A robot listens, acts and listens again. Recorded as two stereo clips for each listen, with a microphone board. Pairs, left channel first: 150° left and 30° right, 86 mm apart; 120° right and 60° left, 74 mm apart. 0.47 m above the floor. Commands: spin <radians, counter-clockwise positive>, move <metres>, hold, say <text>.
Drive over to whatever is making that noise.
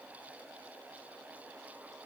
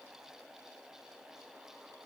hold
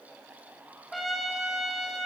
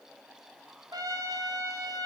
spin 1.05
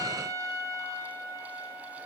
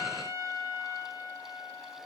spin 0.26
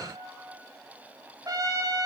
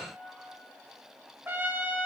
move 1.0
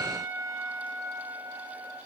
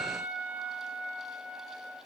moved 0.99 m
move 1.0
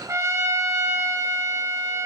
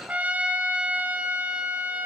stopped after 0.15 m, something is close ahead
say I am next to the trumpet.